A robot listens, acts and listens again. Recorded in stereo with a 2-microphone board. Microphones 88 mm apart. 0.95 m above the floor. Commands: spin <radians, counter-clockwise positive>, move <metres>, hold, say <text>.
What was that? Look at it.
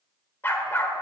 spin 0.44
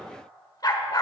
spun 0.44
spin 2.18
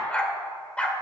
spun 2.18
spin 0.26
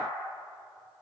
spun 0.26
hold
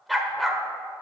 say Found it: a dog barking, straight ahead, 1 to 2 m away.